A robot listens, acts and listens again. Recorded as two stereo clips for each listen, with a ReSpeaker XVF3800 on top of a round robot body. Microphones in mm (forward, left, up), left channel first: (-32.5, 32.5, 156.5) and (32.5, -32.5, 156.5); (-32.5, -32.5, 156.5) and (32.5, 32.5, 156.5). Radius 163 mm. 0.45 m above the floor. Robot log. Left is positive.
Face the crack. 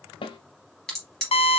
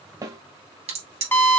note: The crack: 50° left.
cmd yaw +50
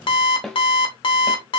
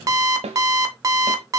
end: I heard a crack from this way, but can't make it out now.